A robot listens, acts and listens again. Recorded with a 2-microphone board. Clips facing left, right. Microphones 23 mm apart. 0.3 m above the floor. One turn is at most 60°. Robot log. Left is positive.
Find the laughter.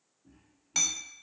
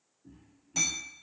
note: The laughter: about 25° right or 155° right.
cmd yaw -25
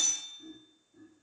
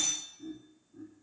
note: The laughter: about 15° right or 165° right.
cmd yaw -15
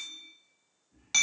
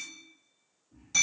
note: The laughter: about 20° right or 160° right.
cmd yaw -20
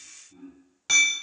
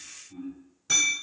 note: The laughter: about 25° right or 155° right.
cmd yaw -25
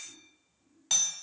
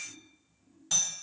cmd idle
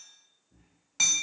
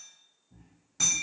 note: The laughter: about 35° right or 145° right.
cmd yaw -35
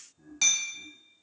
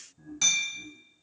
note: So it is at 10° right.
cmd yaw -10
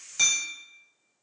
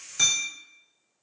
cmd idle
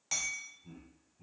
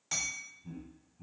end: Found it: laughter, straight ahead, 1 to 2 m away.